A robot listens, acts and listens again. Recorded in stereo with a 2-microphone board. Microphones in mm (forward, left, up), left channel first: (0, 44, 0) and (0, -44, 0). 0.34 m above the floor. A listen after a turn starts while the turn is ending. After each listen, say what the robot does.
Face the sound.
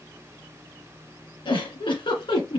Turn 75° left.
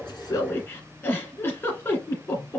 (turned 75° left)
Turn 30° left.
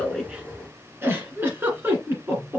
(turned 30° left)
Turn 25° right.
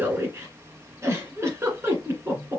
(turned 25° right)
Turn 30° right.
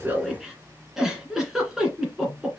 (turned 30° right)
Found it: a giggle, straight ahead.